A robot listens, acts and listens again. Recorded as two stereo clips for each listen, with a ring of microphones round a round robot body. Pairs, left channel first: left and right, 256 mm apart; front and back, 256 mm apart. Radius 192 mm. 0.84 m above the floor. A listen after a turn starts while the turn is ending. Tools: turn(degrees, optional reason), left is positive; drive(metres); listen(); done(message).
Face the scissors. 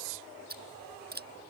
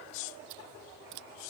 turn(degrees=-145, reason="The scissors: 145° right.")
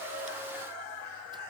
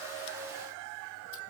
listen()
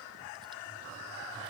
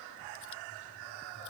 listen()
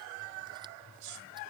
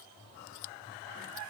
done("I heard scissors from this way, but can't make it out now.")